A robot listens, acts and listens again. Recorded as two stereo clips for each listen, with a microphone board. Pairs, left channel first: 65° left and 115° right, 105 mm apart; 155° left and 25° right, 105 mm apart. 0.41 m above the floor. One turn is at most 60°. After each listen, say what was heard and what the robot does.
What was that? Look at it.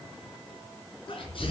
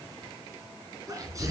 The sneeze: 35° left. Turn 35° left.
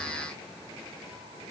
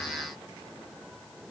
Facing where the sneeze came from. I can't hear it now.